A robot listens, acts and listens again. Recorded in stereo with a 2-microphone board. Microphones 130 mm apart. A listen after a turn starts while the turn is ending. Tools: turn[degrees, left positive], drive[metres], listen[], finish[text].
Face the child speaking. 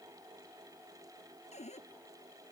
Action: listen[]
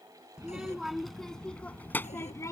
Thought: The child speaking: about 25° left or 155° left.
Action: turn[25]
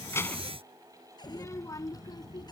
Thought: The child speaking: about 35° left or 145° left.
Action: turn[35]
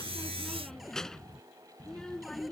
Action: finish[Facing the child speaking.]